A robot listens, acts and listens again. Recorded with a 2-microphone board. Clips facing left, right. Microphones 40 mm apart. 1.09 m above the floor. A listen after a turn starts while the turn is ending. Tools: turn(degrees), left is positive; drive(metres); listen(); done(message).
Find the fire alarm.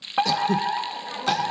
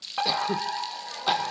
turn(degrees=20)
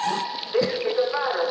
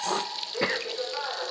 turn(degrees=140)
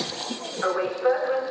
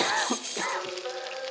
turn(degrees=45)
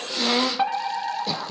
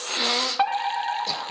turn(degrees=-15)
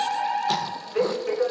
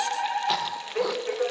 done("Facing the fire alarm, 2 to 4 m away.")